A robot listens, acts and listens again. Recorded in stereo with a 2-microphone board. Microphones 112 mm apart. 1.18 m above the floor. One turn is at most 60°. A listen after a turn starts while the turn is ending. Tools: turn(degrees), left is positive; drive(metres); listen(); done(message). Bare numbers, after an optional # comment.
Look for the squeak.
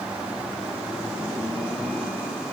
listen()
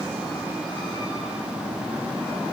listen()
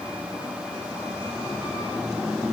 done("I can't make out a squeak to turn to.")